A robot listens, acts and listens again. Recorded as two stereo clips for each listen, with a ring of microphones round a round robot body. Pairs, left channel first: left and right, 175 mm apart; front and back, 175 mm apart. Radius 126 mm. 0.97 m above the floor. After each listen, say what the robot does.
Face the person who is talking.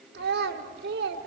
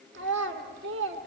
Turn 140° right.
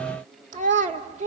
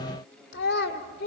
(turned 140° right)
Turn 45° right.
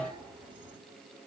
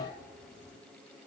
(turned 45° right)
Keep listening.
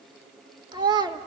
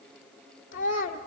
Turn 25° right.
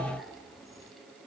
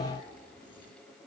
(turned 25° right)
Keep listening.
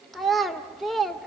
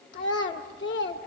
Found it: a child speaking, straight ahead, 1 to 2 m away.